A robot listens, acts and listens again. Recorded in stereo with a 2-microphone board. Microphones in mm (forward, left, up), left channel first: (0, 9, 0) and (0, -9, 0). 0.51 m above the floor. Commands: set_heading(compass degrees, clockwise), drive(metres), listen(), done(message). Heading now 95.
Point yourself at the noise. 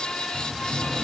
set_heading(125)
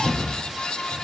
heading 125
done("Facing the cupboard door, over 4 m away.")